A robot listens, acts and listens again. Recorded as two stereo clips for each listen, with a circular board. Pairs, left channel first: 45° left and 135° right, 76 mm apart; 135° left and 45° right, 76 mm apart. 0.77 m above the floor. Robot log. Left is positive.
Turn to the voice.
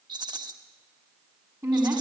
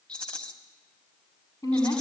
note: The woman speaking: 160° left.
cmd yaw +160
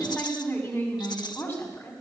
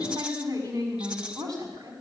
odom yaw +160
note: The woman speaking is now 20° right.
cmd yaw -20
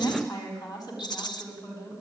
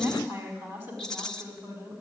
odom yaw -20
end: Found it: a woman speaking, straight ahead, over 4 m away.